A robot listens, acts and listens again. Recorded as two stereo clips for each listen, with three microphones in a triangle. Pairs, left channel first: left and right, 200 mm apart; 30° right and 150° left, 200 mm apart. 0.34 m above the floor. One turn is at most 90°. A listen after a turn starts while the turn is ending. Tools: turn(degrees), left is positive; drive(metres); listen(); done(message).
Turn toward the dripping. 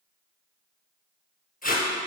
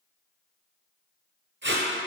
listen()
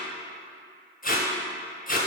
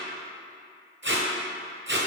listen()
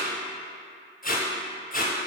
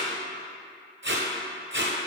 done("I can't make out dripping to turn to.")